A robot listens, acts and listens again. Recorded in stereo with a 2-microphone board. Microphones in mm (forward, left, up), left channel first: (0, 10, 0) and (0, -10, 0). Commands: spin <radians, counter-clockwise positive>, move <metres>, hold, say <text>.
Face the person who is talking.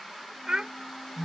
spin -0.79
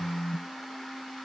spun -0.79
hold
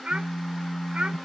spin -1.57
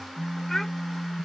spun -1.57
hold
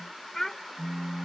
spin 0.35
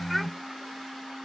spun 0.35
hold
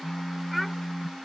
hold
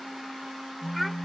say Found it: a child speaking, straight ahead.